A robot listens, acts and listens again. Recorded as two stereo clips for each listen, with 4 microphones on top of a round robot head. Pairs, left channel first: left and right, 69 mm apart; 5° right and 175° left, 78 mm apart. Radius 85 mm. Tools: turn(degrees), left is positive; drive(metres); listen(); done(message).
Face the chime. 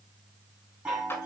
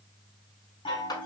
turn(degrees=-15)
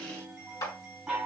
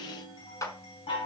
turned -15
done("Facing the chime.")